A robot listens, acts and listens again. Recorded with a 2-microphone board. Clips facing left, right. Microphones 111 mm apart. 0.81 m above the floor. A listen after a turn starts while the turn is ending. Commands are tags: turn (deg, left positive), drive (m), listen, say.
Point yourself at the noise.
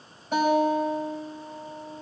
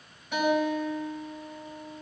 <turn deg="40"/>
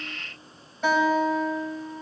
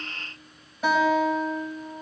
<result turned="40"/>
<say>Found it: a guitar, straight ahead, over 4 m away.</say>